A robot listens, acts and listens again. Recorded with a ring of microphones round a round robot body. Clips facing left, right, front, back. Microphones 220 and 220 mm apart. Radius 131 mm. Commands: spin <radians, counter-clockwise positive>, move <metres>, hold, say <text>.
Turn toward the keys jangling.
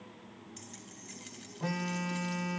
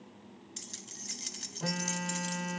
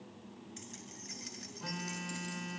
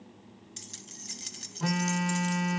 spin -2.27
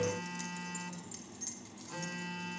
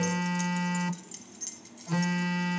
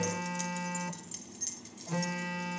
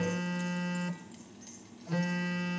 spin -0.61
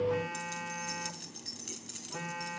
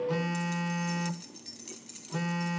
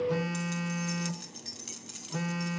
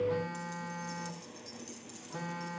spin 0.26
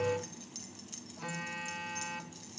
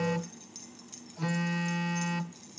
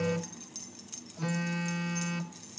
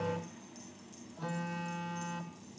say Found it: keys jangling, straight ahead, over 4 m away.